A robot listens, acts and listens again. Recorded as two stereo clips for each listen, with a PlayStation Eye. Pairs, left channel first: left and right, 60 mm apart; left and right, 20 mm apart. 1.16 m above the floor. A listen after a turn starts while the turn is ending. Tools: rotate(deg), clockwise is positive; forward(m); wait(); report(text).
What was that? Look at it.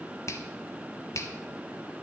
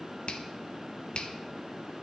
rotate(-55)
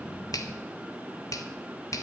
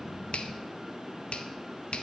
rotate(-70)
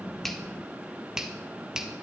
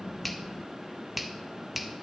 rotate(10)
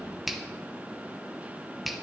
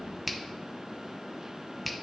report("Found it: a finger snap, straight ahead, 1 to 2 m away.")